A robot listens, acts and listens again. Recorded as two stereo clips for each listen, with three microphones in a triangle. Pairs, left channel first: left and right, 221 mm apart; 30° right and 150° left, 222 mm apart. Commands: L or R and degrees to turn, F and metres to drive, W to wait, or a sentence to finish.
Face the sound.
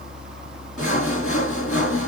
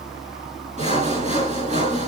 L95
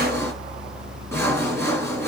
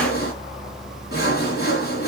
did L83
L10
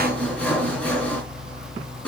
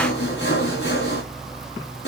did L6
Found it: sawing, straight ahead, 2 to 4 m away.